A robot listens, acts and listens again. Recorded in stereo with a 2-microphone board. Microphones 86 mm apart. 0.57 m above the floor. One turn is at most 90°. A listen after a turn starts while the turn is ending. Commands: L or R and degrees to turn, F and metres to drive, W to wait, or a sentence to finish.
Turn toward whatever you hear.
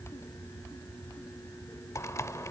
L35
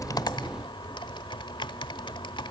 L90
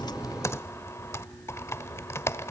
L35
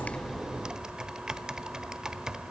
R10
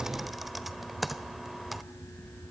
Facing the typing on a keyboard.